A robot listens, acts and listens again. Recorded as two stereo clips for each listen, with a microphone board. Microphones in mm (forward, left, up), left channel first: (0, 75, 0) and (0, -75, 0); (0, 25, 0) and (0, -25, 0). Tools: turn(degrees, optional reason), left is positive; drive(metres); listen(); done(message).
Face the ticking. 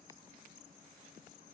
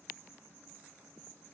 listen()
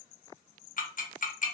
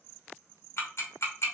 turn(degrees=60, reason="The ticking: about 60° left or 120° left.")
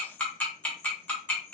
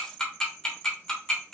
turn(degrees=10, reason="So it is at 10° left.")
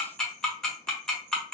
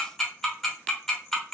done("Found it: ticking, straight ahead, 1 to 2 m away.")